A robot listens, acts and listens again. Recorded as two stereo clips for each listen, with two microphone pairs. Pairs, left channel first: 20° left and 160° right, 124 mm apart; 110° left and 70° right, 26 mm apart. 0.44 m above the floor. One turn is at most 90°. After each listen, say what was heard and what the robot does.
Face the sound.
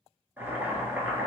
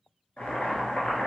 The boiling: 125° left. Turn 90° left.
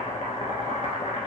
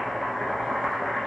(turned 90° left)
The boiling is now 35° left. Turn 35° left.
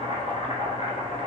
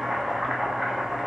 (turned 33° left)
Facing the boiling.